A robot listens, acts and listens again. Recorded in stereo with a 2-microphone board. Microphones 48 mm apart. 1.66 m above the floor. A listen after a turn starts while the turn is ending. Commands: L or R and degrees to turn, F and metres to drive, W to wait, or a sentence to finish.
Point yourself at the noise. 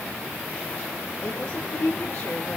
L25
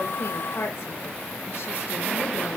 L135
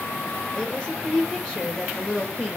L15
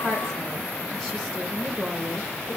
Facing the woman speaking, 2 to 4 m away.